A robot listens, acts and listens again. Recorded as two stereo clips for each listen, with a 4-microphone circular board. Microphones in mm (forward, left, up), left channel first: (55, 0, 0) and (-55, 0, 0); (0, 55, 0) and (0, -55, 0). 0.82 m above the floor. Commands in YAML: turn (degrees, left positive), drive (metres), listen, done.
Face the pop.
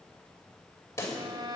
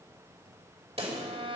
turn: -65
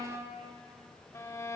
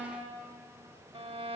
done: "Facing where the pop came from. I can't hear it now."